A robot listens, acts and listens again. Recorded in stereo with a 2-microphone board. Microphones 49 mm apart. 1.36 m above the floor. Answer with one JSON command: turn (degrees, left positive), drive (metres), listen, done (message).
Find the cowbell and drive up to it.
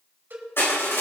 {"turn": -40}
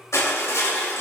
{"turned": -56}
{"listen": true}
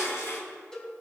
{"turn": 15}
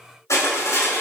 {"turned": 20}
{"listen": true}
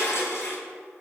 {"listen": true}
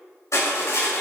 {"done": "I heard a cowbell from this way, but can't make it out now. I did not reach it."}